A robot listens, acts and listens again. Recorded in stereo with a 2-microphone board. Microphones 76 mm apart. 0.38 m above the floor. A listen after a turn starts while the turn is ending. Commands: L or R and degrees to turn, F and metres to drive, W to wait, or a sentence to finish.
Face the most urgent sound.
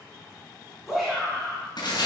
R30
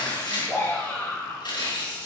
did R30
L20
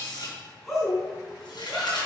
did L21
Found it: a shout, straight ahead, 2 to 4 m away.